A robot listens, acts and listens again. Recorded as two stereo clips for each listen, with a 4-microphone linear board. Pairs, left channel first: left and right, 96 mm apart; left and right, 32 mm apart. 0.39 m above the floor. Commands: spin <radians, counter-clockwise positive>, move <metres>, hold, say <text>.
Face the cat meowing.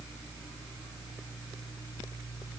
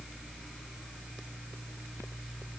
hold
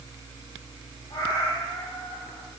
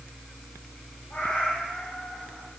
spin 0.79
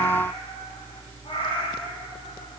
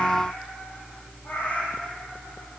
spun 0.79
spin 1.92
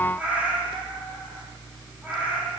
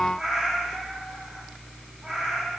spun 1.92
spin -0.26
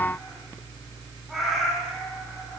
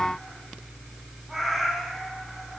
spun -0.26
say Found it: a cat meowing, straight ahead, over 4 m away.